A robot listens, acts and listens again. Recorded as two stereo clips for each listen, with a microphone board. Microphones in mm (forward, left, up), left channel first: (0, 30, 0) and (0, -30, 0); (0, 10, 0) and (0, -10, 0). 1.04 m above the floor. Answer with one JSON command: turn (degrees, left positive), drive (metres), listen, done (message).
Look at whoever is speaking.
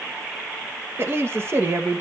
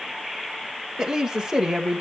{"turn": -40}
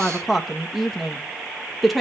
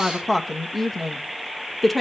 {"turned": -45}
{"done": "Found it: a woman speaking, straight ahead."}